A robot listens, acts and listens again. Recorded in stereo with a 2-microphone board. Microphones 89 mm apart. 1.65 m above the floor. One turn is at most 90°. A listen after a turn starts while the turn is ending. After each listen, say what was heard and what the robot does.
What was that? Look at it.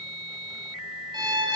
The violin: about 55° right or 125° right. Turn 55° right.
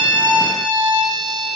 So it is at 65° right. Turn 65° right.
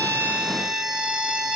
The violin is now 10° right. Turn 10° right.
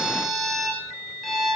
Found it: a violin, straight ahead.